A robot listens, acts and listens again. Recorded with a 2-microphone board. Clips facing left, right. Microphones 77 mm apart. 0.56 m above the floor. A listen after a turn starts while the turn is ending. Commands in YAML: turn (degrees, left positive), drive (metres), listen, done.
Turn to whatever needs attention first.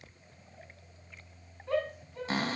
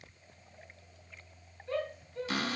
turn: 90
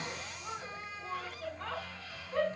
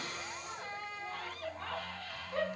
done: "Found it: a shout, straight ahead."